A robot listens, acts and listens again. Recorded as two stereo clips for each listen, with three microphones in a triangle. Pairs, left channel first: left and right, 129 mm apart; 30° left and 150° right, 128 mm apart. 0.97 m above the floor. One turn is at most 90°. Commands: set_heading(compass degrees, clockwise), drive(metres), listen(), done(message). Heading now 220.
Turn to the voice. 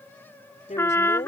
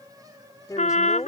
set_heading(130)
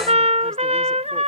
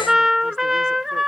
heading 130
listen()
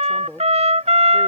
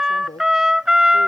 done("Facing the woman speaking.")